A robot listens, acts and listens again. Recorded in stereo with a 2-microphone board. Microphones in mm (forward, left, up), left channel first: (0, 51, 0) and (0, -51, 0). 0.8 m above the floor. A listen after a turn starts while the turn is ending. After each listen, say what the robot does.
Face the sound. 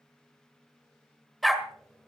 Turn 30° left.
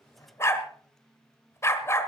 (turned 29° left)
Turn 150° left.
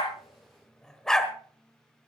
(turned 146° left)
Facing the dog barking, 1 to 2 m away.